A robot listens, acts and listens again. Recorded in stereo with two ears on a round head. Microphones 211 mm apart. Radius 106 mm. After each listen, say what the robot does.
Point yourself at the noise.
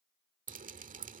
Turn 35° right.
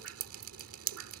Turn 110° right.
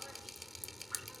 Facing the dripping.